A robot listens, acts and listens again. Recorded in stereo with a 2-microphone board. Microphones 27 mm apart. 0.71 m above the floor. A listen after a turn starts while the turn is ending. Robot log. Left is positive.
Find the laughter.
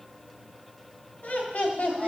note: The laughter: about 55° left or 125° left.
cmd yaw +55
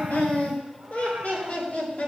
note: So it is at 75° left.
cmd yaw +75
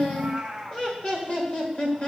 note: The laughter is now 45° left.
cmd yaw +45
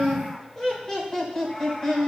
note: The laughter is now 15° left.
cmd yaw +15
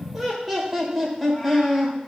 end: Facing the laughter.